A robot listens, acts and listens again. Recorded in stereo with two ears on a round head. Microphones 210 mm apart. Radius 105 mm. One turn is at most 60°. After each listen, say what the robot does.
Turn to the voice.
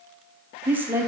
Turn 30° right.
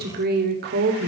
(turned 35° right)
Turn 60° right.
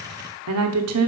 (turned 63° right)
Turn 60° right.
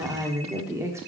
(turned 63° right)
Turn 10° right.
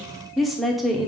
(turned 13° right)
Found it: a woman speaking, straight ahead.